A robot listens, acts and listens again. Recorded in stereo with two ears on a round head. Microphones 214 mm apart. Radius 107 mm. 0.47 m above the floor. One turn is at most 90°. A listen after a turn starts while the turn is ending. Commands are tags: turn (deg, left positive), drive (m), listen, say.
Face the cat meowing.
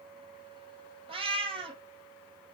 <turn deg="-25"/>
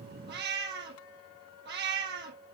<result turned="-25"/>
<turn deg="-90"/>
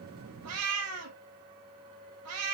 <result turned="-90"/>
<turn deg="-70"/>
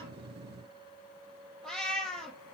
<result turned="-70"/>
<say>Facing the cat meowing.</say>